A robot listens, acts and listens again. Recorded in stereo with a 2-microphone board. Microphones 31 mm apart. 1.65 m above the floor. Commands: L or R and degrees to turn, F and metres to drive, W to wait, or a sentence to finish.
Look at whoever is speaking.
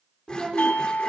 R25
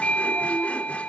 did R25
W
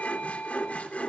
W
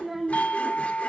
Found it: a child speaking, straight ahead.